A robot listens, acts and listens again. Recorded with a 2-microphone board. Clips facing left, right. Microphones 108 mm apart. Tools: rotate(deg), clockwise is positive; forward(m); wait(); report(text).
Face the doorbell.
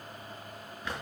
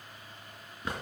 wait()
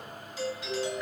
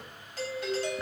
rotate(55)
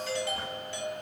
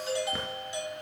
rotate(20)
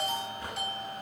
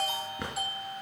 rotate(10)
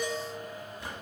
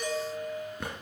report("Facing the doorbell, 2 to 4 m away.")